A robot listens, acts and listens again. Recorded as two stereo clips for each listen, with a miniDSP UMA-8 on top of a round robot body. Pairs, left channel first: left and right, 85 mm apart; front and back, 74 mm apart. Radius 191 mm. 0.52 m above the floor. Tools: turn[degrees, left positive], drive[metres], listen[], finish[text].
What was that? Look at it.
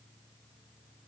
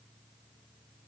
Action: listen[]
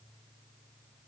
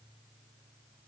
Action: listen[]
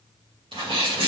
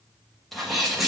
Thought: The sneeze: 90° right.
Action: turn[-90]
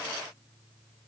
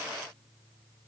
Action: finish[Facing where the sneeze came from. I can't hear it now.]